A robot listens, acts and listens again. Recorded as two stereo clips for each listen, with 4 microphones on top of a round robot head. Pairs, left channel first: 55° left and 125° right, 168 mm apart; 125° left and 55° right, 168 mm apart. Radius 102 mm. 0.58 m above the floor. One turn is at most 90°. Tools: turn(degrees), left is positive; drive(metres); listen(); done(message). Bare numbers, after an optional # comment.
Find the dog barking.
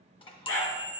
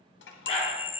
# The dog barking: 65° left.
turn(65)
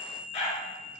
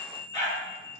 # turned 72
done("Found it: a dog barking, straight ahead, 2 to 4 m away.")